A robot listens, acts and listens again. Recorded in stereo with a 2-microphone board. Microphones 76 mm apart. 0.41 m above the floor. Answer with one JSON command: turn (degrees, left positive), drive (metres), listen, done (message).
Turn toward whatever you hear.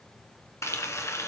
{"turn": 40}
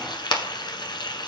{"turn": 100}
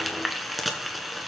{"done": "Facing the frying."}